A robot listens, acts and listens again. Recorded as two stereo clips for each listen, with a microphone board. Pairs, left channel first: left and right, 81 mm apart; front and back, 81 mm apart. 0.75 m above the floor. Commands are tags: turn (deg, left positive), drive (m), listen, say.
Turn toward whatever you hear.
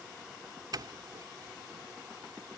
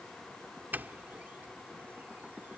<turn deg="-115"/>
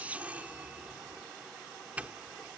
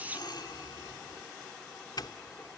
<turn deg="-20"/>
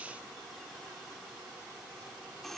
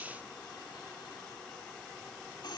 <say>Found it: a doorbell, straight ahead.</say>